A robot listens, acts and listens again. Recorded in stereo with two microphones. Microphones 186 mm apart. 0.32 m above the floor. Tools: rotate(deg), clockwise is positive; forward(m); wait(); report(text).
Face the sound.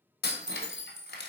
rotate(-90)
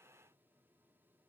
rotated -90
report("Facing where the breaking glass came from. I can't hear it now.")